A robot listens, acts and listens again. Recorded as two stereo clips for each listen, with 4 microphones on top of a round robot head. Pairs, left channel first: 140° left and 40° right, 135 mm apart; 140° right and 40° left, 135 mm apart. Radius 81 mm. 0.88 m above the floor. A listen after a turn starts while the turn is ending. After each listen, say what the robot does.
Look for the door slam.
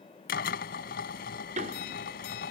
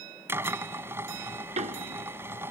Found it: a door slam, straight ahead.